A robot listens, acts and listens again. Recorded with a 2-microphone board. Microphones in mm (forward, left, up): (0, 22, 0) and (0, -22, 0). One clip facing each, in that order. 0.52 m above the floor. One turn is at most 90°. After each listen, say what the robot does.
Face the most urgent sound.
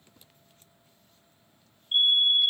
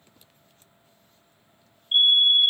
Turn 40° right.
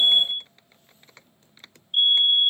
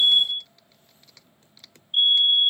Facing the fire alarm.